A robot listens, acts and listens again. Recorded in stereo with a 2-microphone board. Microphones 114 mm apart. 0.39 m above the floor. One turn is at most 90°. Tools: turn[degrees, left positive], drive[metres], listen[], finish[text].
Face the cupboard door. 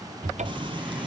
Action: turn[-90]
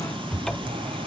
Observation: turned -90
Action: finish[Facing the cupboard door.]